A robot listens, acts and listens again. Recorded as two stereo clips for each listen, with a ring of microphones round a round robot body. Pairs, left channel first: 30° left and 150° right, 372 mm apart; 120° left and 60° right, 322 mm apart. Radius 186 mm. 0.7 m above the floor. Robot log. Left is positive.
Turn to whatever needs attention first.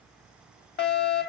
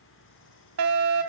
note: The fire alarm: 30° right.
cmd yaw -30
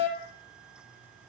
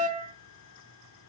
end: Facing the fire alarm, 2 to 4 m away.